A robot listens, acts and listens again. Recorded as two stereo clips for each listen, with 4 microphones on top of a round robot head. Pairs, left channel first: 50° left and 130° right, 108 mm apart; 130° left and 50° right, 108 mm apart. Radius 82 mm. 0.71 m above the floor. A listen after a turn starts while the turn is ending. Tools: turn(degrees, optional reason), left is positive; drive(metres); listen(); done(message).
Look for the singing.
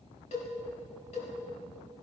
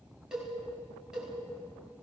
listen()
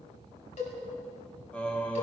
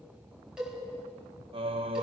turn(degrees=-25, reason="The singing: 25° right.")
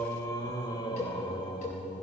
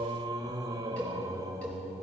turn(degrees=10, reason="The singing is now 10° left.")
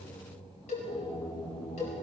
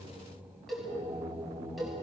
turn(degrees=10, reason="The singing is now 10° left.")
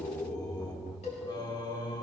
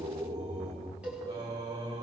done("Facing the singing.")